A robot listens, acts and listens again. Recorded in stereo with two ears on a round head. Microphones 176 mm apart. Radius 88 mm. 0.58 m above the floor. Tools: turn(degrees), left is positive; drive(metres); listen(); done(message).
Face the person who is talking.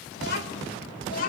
turn(degrees=45)
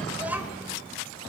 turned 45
turn(degrees=-10)
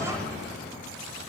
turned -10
listen()
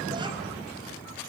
listen()
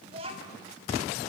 turn(degrees=-30)
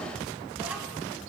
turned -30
listen()
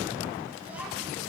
listen()
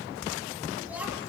done("Facing where the child speaking came from. I can't hear it now.")